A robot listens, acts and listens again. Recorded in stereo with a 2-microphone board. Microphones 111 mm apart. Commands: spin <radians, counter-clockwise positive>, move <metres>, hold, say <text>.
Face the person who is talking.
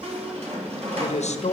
spin 1.22
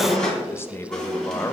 spin 0.35
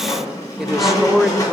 say Facing the man speaking, under 1 m away.